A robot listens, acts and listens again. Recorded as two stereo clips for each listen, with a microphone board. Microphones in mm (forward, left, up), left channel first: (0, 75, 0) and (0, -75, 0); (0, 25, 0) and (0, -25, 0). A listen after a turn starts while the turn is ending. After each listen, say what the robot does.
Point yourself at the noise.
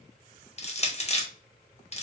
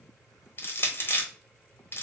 Turn 45° left.
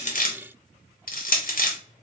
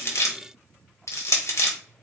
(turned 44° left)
Turn 85° left.
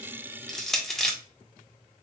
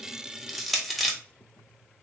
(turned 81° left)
Found it: crushing, straight ahead, under 1 m away.